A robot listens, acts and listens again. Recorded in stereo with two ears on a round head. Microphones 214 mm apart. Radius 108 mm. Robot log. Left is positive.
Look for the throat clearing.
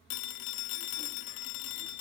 cmd idle
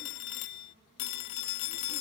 cmd idle
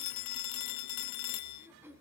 cmd yaw -30
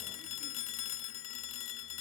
cmd idle
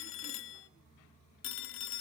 cmd idle
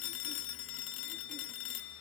end: I heard throat clearing, but can't make it out now. It was about 20° left or 140° right.